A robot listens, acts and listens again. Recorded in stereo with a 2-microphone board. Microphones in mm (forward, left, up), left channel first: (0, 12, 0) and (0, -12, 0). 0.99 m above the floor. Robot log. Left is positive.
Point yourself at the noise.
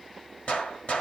note: The gunshot: about 60° left or 120° left.
cmd yaw +60
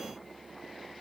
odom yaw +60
cmd idle
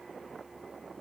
end: I heard a gunshot, but can't make it out now. It was about straight ahead or 60° left.